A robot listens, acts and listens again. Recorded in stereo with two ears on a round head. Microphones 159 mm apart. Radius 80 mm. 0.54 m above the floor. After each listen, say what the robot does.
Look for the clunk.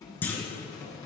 Turn 30° left.
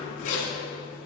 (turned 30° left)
Keep listening.
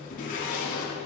I heard a clunk, but can't make it out now. It was about 20° right or 140° left.